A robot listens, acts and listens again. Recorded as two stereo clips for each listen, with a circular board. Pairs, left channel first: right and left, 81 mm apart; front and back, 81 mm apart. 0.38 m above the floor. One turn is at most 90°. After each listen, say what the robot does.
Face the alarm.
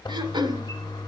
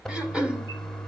Keep listening.
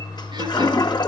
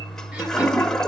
Keep listening.
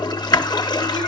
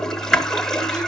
I can't make out an alarm to turn to.